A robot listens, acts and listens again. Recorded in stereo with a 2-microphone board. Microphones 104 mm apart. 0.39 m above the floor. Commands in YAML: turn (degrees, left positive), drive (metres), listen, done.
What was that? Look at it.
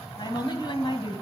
turn: 45
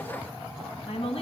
turn: 65
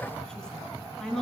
done: "Found it: a woman speaking, straight ahead."